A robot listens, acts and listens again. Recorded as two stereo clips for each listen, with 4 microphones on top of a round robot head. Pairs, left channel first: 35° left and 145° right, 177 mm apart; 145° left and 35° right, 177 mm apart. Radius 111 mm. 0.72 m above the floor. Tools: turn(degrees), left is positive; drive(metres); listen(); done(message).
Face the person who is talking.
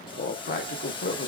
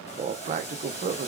done("Facing the man speaking, under 1 m away.")